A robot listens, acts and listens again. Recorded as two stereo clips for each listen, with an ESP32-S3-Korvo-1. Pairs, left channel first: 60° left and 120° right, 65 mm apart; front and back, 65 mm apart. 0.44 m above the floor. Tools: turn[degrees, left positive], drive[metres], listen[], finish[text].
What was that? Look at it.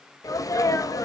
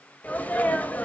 Thought: The sneeze: 65° left.
Action: turn[65]
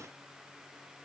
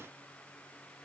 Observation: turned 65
Action: finish[I heard a sneeze from this way, but can't make it out now.]